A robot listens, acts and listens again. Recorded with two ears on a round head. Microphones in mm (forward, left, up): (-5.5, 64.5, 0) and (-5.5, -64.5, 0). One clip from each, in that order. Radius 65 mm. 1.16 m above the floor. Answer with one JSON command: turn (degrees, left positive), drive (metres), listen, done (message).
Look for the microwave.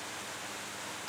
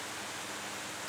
{"listen": true}
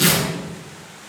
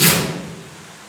{"listen": true}
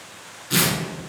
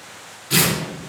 {"done": "I can't make out a microwave, only tearing paper."}